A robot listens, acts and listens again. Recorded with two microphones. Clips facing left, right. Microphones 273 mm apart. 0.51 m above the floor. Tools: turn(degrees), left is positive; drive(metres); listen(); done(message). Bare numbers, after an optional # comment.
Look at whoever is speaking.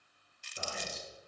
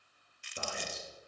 # The man speaking: about 65° right or 115° right.
turn(-65)
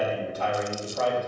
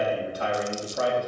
# So it is at 15° right.
turn(-15)
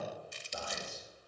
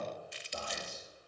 done("Facing the man speaking.")